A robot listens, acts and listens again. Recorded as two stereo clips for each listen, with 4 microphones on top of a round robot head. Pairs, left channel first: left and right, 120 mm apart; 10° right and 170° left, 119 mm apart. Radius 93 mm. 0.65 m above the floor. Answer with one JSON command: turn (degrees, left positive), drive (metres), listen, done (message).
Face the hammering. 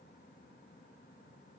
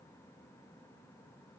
{"listen": true}
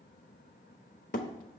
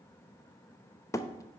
{"turn": 55}
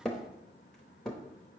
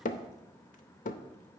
{"done": "Facing the hammering."}